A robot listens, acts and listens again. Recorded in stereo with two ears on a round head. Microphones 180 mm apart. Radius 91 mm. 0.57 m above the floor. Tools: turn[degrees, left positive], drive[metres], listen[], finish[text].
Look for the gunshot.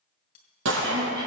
Thought: The gunshot: about 65° right or 115° right.
Action: turn[-65]
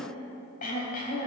Action: listen[]
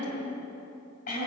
Action: finish[I heard a gunshot, but can't make it out now. It was about straight ahead or 50° right.]